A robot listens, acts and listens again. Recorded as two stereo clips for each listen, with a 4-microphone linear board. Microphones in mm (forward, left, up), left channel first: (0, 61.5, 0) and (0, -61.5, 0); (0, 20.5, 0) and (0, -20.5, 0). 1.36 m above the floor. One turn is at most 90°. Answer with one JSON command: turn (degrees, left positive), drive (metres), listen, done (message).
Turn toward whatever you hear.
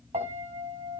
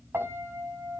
{"turn": -65}
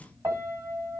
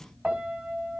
{"turn": -30}
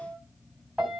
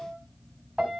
{"turn": -10}
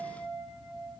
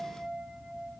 {"done": "Facing the piano, 2 to 4 m away."}